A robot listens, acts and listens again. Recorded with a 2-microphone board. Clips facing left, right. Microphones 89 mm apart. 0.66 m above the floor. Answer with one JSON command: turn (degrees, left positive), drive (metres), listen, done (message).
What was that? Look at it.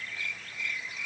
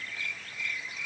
{"listen": true}
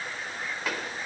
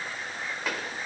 {"turn": 30}
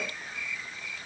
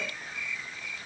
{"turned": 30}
{"listen": true}
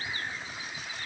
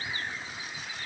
{"done": "I heard a pop, but can't make it out now. It was about 30° right or 150° left."}